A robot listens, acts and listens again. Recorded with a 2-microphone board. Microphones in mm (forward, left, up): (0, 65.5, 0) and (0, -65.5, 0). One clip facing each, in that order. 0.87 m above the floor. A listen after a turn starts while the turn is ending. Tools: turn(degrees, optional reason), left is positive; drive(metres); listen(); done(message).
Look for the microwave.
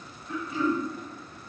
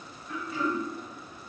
listen()
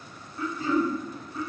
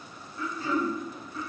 listen()
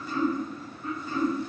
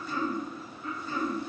done("I can't make out a microwave to turn to.")